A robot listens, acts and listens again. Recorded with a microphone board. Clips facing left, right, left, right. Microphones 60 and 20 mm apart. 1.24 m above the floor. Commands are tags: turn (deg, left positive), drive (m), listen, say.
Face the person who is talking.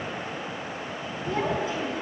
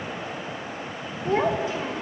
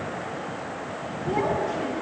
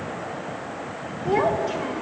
<turn deg="-90"/>
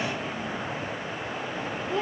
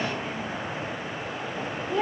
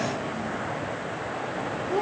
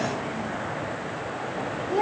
<say>Found it: a child speaking, straight ahead.</say>